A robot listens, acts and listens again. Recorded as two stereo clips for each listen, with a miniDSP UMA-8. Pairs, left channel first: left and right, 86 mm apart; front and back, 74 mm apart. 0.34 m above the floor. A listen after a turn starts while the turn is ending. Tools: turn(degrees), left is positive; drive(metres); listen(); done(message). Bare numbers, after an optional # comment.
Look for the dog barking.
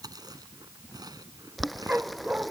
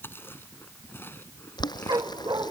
# The dog barking: 165° right.
turn(-165)
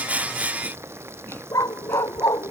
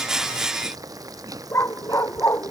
# The dog barking is now 50° left.
turn(50)
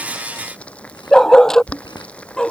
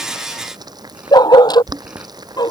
done("Found it: a dog barking, straight ahead.")